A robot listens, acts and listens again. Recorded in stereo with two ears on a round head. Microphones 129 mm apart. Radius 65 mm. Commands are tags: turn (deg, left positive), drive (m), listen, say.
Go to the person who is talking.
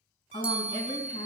<turn deg="40"/>
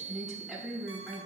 <drive m="1.0"/>
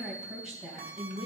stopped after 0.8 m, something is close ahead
<say>Something is in my way. I am facing the woman speaking but have not reached it.</say>